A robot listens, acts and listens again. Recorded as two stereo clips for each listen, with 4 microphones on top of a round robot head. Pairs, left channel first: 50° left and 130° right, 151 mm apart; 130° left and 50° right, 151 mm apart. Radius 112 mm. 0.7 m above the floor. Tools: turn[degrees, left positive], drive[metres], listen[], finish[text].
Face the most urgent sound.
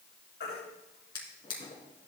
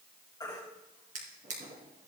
Thought: The baby crying: 65° left.
Action: turn[65]
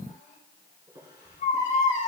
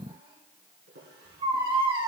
Thought: The baby crying is now 10° left.
Action: turn[10]
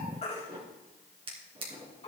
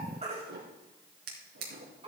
Action: finish[Facing the baby crying.]